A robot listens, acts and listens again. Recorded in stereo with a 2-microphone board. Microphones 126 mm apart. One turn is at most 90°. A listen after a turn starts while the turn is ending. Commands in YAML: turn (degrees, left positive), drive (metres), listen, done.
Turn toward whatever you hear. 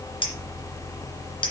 turn: 45
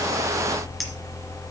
listen: true
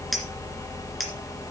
done: "Facing the clink."